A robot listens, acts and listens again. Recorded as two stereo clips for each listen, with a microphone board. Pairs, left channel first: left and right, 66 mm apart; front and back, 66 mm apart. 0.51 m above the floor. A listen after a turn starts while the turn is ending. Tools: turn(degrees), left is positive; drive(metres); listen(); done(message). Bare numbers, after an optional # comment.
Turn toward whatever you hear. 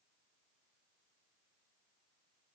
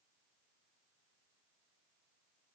listen()
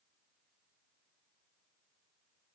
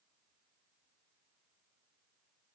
listen()
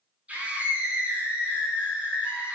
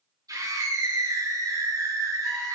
# The scream: 160° right.
turn(-160)
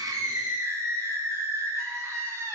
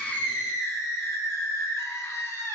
# The scream is now 45° right.
turn(-45)
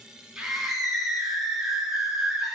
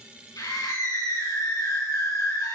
done("Found it: a scream, straight ahead.")